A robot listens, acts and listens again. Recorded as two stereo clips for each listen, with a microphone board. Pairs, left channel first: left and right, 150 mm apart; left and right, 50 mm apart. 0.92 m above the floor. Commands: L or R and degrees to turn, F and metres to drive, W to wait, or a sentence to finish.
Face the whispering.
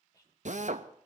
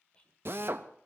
L25
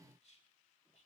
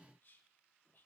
L130
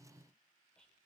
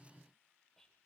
Found it: whispering, straight ahead.